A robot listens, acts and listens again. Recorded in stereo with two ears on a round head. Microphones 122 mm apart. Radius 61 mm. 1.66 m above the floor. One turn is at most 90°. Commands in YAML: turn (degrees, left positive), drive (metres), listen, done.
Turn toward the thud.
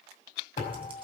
turn: 30
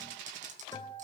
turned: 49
listen: true
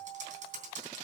done: "I heard a thud, but can't make it out now. It was about 15° right or 100° left."